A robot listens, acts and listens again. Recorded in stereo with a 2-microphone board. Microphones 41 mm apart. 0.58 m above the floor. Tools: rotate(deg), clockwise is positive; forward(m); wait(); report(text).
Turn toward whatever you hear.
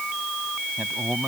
rotate(45)
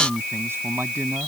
rotate(105)
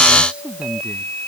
rotate(25)
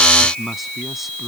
report("Facing the man speaking.")